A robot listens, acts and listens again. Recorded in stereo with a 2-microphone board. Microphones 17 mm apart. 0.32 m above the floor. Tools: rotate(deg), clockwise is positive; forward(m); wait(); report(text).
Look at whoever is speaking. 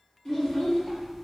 rotate(-45)
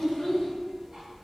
rotate(-90)
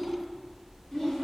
rotate(-25)
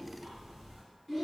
report("Facing the child speaking.")